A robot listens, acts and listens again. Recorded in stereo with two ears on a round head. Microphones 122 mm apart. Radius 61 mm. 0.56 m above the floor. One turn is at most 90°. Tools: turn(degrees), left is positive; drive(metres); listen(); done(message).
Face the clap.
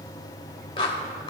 turn(degrees=40)
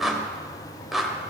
done("Found it: a clap, straight ahead, 1 to 2 m away.")